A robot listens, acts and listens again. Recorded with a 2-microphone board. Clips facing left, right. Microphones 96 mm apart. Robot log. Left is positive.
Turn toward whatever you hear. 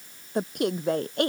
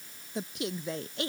note: The woman speaking: about 55° left or 125° left.
cmd yaw +55
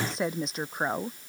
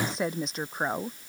end: Facing the woman speaking.